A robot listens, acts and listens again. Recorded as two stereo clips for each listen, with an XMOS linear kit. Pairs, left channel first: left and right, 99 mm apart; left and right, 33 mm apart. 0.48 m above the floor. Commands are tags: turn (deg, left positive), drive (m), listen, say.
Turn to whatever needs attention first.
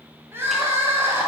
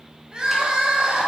<turn deg="-25"/>
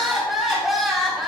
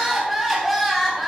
<say>Facing the crying.</say>